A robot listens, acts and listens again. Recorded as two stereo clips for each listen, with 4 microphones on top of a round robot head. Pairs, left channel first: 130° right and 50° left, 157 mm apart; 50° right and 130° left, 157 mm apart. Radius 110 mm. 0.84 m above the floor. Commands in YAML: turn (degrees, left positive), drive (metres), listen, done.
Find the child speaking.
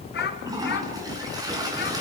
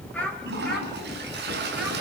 turn: -135
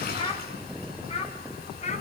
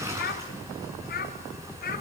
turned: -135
turn: -80
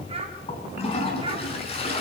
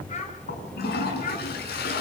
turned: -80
turn: -10
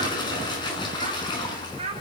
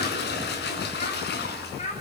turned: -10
done: "Found it: a child speaking, straight ahead."